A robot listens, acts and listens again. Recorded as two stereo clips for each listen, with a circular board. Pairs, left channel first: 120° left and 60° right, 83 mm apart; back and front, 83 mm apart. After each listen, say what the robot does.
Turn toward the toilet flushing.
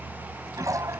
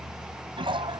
Turn 10° right.
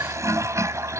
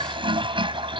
Found it: a toilet flushing, straight ahead.